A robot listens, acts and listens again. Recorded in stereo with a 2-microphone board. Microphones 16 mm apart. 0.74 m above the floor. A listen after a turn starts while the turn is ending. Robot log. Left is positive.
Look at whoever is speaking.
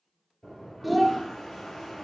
cmd yaw -30
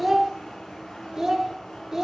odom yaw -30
note: So it is at 150° right.
cmd yaw -150
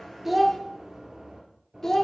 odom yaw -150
note: The child speaking is now 25° left.
cmd yaw +25
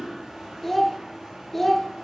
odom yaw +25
note: The child speaking is now 10° left.
cmd yaw +10
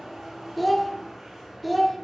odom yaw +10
end: Found it: a child speaking, straight ahead, 1 to 2 m away.